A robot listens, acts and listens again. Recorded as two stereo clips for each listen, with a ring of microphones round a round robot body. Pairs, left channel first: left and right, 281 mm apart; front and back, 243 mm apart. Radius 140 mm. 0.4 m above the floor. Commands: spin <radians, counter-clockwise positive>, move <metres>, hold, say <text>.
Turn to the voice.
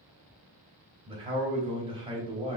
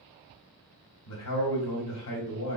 spin -0.35
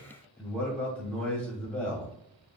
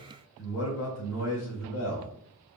say Found it: a man speaking, straight ahead, 2 to 4 m away.